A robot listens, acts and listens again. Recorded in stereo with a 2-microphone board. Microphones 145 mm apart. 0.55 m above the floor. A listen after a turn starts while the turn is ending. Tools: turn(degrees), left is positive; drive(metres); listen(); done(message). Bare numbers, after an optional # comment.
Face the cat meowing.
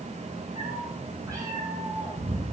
# The cat meowing: about 20° right or 160° right.
turn(-20)
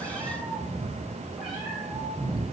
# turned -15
turn(30)
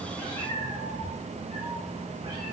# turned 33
# So it is at 30° right.
turn(-30)
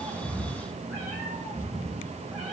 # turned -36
done("Facing the cat meowing, over 4 m away.")